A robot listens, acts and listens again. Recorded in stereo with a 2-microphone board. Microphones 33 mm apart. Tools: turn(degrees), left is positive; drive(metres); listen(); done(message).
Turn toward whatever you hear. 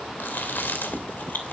turn(degrees=90)
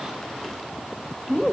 done("Facing the chewing.")